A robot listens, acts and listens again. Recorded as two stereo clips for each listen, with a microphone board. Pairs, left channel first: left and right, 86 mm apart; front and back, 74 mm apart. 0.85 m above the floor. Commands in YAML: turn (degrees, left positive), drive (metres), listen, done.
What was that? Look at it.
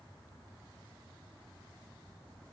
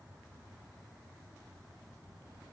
listen: true
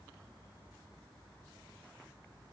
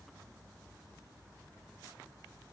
listen: true
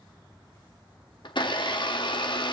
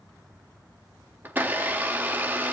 turn: 115
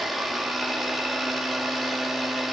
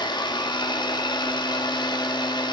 done: "Facing the blender, 1 to 2 m away."